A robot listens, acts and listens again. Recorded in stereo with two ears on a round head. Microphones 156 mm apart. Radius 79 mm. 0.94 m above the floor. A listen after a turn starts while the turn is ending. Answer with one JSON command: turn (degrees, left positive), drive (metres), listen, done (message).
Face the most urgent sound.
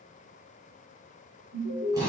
{"turn": -65}
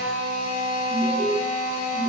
{"turn": -35}
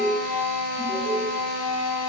{"listen": true}
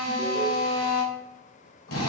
{"listen": true}
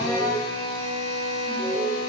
{"done": "Facing the alarm, 2 to 4 m away."}